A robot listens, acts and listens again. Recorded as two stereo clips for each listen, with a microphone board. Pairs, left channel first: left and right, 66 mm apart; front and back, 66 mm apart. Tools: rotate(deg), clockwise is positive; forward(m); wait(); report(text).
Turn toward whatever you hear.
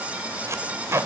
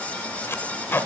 rotate(50)
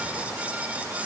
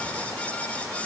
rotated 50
wait()
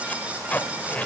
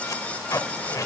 rotate(-25)
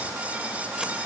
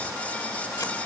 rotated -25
wait()
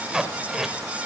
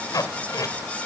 rotate(10)
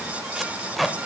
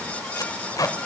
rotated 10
report("Found it: tape being pulled, straight ahead.")